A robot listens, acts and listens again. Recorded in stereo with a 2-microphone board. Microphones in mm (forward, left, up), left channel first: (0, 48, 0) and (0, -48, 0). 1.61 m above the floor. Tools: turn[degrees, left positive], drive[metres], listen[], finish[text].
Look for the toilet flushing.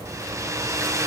Action: listen[]
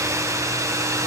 Action: listen[]
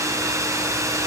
Action: finish[I can't make out a toilet flushing, only a hair dryer.]